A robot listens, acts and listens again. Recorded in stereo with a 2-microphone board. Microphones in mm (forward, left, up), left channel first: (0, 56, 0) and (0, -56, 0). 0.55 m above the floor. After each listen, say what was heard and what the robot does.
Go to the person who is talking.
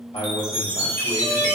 The man speaking: about 65° left or 115° left. Turn 65° left.
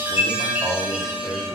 So it is at 15° left. Turn 15° left.
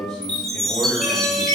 Drive 1.0 m forward.
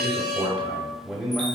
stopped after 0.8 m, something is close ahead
Arrived at the man speaking, straight ahead.